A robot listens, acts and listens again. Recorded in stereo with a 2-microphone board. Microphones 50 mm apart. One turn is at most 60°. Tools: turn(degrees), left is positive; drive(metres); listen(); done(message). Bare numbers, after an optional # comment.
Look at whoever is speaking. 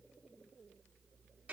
listen()
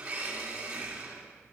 listen()
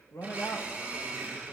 # The man speaking: about 60° left or 120° left.
turn(60)
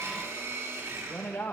# So it is at 55° left.
turn(55)
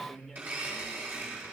done("Facing the man speaking.")